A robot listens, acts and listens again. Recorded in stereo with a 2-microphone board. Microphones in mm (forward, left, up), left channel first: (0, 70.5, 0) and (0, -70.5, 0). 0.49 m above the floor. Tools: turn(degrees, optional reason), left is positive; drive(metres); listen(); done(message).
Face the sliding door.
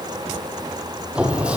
turn(degrees=-30)
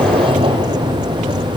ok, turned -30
turn(degrees=-140, reason="So it is at 140° right.")
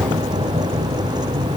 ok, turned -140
turn(degrees=-50, reason="The sliding door is now 50° right.")
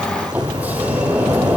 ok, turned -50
turn(degrees=-10, reason="The sliding door is now 10° right.")
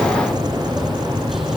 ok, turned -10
done("Found it: a sliding door, straight ahead, 2 to 4 m away.")